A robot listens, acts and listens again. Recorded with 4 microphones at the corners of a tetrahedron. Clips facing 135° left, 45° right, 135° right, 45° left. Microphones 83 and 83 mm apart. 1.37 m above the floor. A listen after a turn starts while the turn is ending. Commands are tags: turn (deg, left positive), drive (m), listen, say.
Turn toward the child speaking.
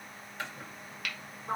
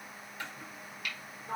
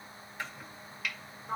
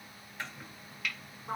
<listen/>
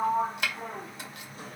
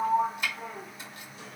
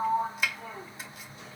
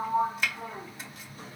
<listen/>
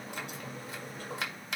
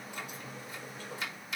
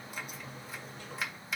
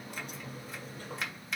<say>I can't make out a child speaking to turn to.</say>